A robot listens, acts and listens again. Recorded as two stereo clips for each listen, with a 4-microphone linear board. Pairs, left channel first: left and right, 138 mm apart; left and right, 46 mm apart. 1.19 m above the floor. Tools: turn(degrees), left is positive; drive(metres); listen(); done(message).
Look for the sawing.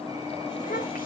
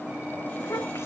listen()
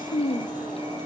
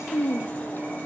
listen()
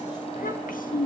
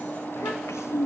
done("I can't make out sawing, only a child speaking.")